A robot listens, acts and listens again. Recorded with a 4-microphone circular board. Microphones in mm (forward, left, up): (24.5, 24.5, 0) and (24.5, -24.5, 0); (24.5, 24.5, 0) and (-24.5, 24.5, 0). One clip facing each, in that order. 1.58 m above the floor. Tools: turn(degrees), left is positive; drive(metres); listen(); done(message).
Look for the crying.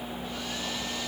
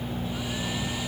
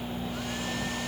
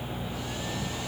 listen()
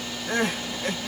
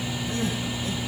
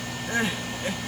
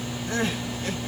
turn(degrees=70)
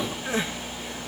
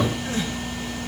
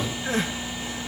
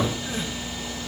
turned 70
turn(degrees=20)
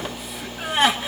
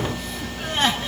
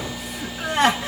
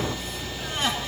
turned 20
turn(degrees=10)
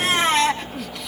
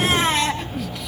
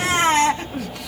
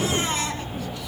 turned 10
done("Found it: crying, straight ahead.")